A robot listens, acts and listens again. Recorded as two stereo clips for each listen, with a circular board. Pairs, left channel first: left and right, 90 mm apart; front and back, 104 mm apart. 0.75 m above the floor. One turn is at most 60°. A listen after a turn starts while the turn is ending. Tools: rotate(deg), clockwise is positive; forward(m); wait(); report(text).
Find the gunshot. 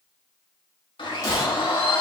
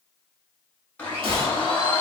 rotate(-60)
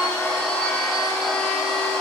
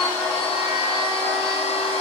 rotate(-60)
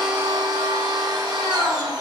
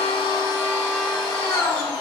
rotate(-30)
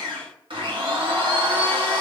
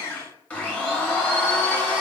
report("I heard a gunshot from this way, but can't make it out now.")